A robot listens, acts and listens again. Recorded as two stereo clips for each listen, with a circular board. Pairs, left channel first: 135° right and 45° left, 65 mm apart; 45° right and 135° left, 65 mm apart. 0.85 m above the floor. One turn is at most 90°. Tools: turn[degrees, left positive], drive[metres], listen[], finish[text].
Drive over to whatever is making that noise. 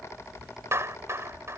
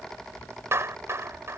Thought: The clap: 90° left.
Action: turn[90]
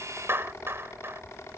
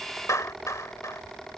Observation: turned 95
Action: drive[1.0]
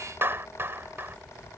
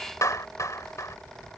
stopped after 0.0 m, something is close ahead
Thought: The clap is now 10° right.
Action: turn[-10]
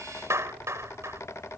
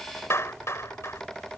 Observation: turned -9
Action: finish[Something is in my way. I am facing the clap but have not reached it.]